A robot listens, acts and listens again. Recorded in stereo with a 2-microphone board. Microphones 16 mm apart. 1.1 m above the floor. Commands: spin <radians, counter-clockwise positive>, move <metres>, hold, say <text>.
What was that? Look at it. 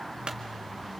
spin -1.22
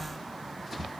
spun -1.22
hold
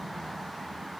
say I heard a clunk, but can't make it out now. It was about straight ahead or 40° right.